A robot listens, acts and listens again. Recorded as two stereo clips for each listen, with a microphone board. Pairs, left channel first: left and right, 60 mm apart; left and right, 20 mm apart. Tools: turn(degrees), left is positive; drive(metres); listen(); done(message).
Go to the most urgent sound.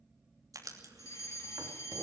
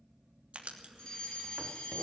turn(degrees=55)
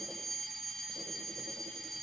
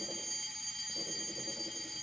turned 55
drive(metres=1.0)
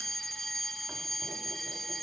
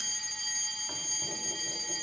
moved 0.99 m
drive(metres=1.0)
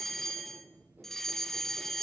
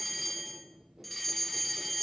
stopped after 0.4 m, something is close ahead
done("I am next to the fire alarm.")